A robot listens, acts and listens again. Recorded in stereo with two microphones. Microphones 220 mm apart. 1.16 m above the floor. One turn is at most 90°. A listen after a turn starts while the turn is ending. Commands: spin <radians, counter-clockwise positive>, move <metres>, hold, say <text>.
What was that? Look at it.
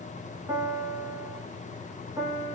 spin -0.52
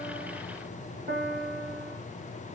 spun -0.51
spin -1.57
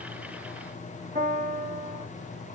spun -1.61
spin -0.79
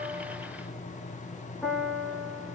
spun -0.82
say Found it: a piano, straight ahead.